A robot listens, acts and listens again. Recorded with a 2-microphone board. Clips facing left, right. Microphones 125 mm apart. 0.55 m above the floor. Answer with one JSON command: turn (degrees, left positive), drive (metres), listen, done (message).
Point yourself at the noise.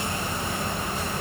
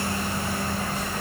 {"listen": true}
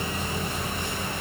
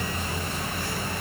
{"listen": true}
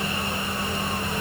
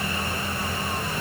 {"done": "I can't make out anything to turn to."}